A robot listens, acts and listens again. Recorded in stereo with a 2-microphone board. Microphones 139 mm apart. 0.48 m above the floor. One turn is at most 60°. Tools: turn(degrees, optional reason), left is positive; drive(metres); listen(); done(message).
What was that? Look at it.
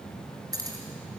turn(degrees=-25, reason="The keys jangling: about 25° right or 155° right.")
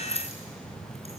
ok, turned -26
turn(degrees=-60, reason="So it is at 130° right.")
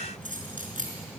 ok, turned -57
turn(degrees=-60, reason="The keys jangling is now 70° right.")
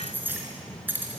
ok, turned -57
turn(degrees=-15, reason="The keys jangling is now 15° right.")
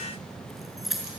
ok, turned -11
done("Facing the keys jangling, over 4 m away.")